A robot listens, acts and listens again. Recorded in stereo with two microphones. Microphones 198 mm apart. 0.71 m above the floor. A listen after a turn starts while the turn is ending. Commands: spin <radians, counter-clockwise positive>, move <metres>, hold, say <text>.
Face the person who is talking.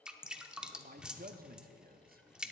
spin -0.87
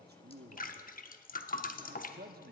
spin -1.22
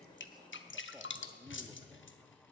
hold
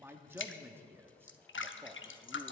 spin -0.26
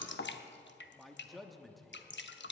say Found it: a man speaking, straight ahead.